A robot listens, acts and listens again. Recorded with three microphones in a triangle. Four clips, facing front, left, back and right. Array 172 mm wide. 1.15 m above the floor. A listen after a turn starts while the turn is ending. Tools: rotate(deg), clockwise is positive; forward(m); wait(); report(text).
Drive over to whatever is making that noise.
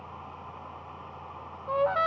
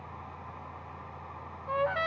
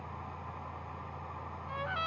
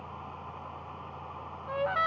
forward(1.0)
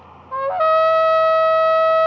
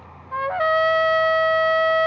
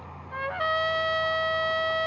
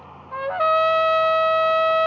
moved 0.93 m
forward(1.0)
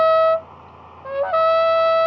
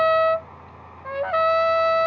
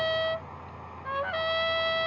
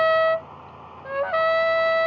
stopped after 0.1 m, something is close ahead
report("I am next to the trumpet.")